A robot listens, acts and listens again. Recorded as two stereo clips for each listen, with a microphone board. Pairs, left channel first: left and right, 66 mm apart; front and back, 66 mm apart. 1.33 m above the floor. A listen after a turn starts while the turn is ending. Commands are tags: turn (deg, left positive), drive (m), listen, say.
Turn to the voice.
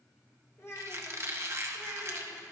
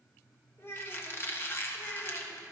<turn deg="50"/>
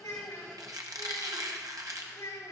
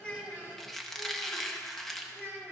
<turn deg="60"/>
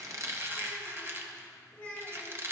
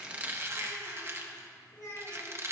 <turn deg="25"/>
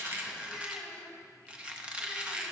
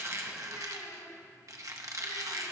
<listen/>
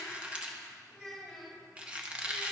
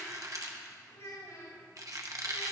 <say>Found it: a child speaking, straight ahead.</say>